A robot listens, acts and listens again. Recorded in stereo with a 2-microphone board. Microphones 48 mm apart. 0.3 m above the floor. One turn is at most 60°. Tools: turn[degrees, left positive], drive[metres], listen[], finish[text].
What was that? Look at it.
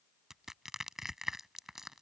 Action: turn[-30]
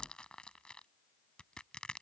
Thought: So it is at 25° left.
Action: turn[25]
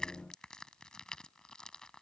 Thought: The crushing is now 20° left.
Action: turn[20]
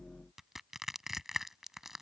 Action: finish[Facing the crushing.]